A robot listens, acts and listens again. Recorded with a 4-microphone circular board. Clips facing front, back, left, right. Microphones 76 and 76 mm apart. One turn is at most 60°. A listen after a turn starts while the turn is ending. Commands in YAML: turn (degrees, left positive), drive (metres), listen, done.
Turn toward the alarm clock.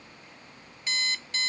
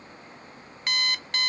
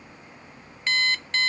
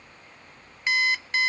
turn: -60
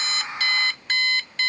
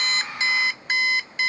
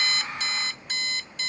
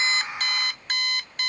turn: -60
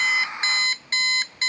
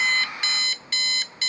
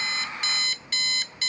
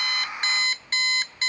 turn: -50
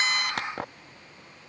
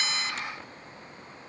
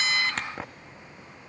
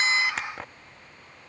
done: "Found it: an alarm clock, straight ahead."